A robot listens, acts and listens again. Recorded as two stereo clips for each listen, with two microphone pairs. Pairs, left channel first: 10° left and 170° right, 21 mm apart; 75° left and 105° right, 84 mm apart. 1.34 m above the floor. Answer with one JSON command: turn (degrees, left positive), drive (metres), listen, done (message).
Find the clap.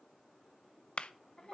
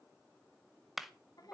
{"turn": -20}
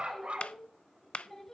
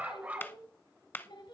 {"turn": 10}
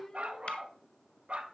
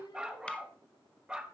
{"listen": true}
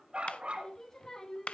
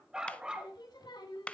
{"done": "Facing the clap, under 1 m away."}